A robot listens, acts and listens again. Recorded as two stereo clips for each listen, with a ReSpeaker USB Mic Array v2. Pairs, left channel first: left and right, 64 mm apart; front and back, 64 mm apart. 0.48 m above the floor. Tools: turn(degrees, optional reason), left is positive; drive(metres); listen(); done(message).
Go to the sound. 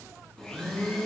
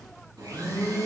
turn(degrees=175, reason="The blender: 175° left.")
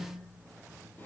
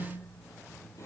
listen()
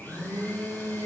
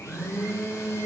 turn(degrees=30, reason="The blender is now 30° left.")
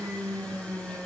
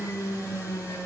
turn(degrees=20, reason="The blender is now 20° left.")
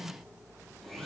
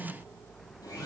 drive(metres=1.0)
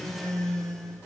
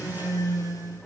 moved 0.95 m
turn(degrees=10, reason="The blender is now 10° left.")
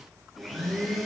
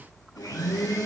drive(metres=1.0)
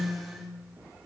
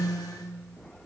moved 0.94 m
drive(metres=1.0)
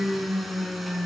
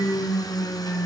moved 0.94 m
drive(metres=1.0)
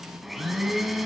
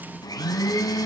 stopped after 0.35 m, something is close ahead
done("Arrived at the blender, straight ahead.")